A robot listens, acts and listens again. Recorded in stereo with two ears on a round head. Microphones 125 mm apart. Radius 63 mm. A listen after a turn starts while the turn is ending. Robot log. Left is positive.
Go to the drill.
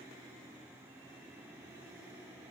cmd idle
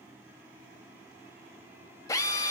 note: The drill: about 25° left or 155° left.
cmd yaw +25
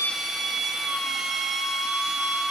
cmd fwd 1.0
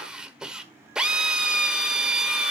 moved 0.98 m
cmd fwd 1.0
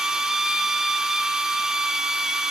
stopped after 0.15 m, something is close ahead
end: Arrived at the drill, straight ahead.